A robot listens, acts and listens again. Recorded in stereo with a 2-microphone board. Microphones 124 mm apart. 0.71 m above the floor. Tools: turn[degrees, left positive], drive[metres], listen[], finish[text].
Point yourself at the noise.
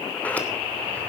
Action: turn[30]
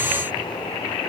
Action: listen[]
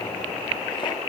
Action: listen[]
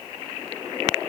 Action: finish[I heard a sliding door, but can't make it out now. It was about 20° right or 140° left.]